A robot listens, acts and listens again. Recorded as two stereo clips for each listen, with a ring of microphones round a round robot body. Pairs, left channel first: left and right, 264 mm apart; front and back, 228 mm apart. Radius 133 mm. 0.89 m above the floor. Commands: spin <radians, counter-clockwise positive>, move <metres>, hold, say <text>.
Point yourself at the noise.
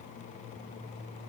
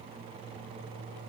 hold
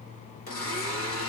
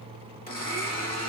spin 0.87
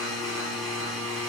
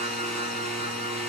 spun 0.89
say Found it: a blender, straight ahead, 1 to 2 m away.